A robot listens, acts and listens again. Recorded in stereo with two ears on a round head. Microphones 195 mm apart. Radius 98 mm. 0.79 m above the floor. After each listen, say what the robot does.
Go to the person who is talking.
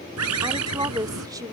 Turn 20° right.
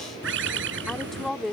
Drive 1.0 m forward.
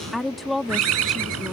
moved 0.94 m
Drive 1.0 m forward.
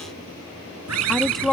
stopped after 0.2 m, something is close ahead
Arrived at the woman speaking, straight ahead.